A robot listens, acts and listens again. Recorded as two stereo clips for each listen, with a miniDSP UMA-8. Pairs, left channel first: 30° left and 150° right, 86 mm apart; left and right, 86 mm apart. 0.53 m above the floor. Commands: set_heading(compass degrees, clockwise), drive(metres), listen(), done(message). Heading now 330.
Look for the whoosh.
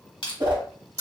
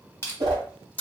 set_heading(95)
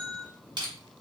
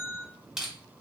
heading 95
listen()
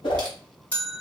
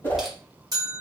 set_heading(65)
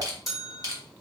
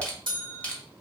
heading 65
listen()
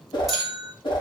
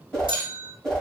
set_heading(55)
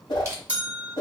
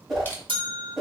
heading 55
done("Found it: a whoosh, straight ahead.")